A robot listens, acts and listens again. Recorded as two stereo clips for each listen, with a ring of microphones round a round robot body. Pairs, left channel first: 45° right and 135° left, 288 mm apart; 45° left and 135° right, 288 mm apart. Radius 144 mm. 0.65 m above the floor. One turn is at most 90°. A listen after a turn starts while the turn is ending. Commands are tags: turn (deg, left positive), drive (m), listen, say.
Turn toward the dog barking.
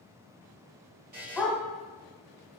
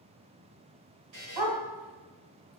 <turn deg="-90"/>
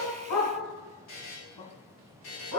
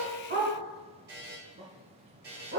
<turn deg="-75"/>
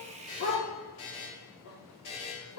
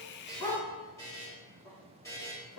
<turn deg="-35"/>
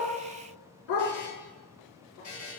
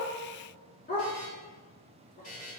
<turn deg="-15"/>
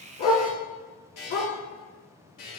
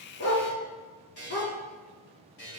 <say>Found it: a dog barking, straight ahead, 2 to 4 m away.</say>